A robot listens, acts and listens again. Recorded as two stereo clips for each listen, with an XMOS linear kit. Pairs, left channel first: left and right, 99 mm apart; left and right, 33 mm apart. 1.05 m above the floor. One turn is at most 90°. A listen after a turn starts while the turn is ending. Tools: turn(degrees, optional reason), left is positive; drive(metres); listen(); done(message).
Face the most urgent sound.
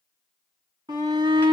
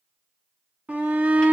turn(degrees=-45, reason="The shout: about 45° right or 135° right.")
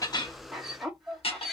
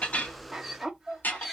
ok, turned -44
done("Facing the shout.")